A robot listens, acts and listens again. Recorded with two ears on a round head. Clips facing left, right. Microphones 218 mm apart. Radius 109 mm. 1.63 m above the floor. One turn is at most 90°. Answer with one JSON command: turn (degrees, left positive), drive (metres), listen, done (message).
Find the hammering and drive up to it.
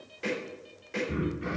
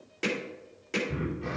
{"turn": -75}
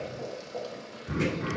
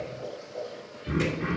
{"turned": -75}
{"listen": true}
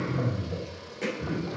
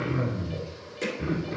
{"turn": -20}
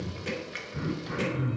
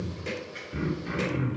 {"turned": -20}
{"listen": true}
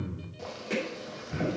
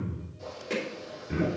{"drive": 1.0}
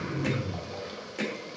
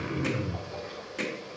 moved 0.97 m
{"drive": 1.0}
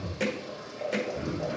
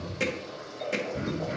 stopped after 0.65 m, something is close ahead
{"done": "I am next to the hammering."}